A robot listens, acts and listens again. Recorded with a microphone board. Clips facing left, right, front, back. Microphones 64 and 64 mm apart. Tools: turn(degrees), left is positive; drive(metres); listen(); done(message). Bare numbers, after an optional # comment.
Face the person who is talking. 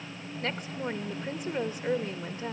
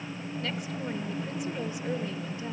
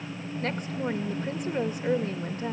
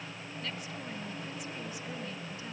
# The woman speaking: 45° left.
turn(45)
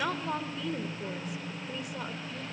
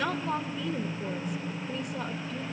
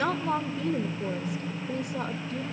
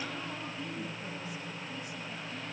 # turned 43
done("Facing the woman speaking.")